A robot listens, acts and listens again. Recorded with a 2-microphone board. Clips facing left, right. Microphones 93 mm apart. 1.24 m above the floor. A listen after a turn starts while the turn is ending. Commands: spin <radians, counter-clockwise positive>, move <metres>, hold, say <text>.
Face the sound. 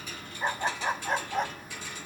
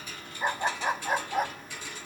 spin -0.52
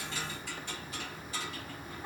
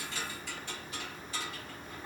spin 0.35
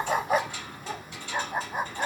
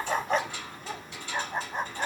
spin 0.17
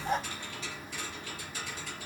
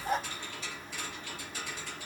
say Facing the dog barking.